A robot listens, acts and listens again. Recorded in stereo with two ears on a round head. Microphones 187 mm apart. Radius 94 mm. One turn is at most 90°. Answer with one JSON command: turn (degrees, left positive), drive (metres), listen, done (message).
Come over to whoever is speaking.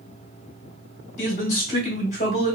{"turn": 30}
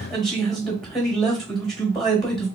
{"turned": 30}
{"drive": 1.0}
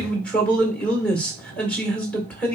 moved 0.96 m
{"drive": 1.0}
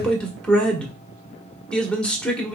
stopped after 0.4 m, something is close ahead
{"done": "Arrived at the man speaking, straight ahead."}